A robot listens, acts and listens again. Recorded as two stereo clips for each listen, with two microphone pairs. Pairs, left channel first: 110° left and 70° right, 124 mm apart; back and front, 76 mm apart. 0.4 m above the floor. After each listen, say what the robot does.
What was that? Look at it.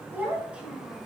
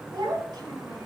Turn 15° left.
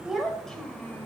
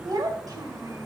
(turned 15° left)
Turn 35° left.
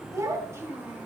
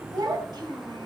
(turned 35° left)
Found it: a child speaking, straight ahead.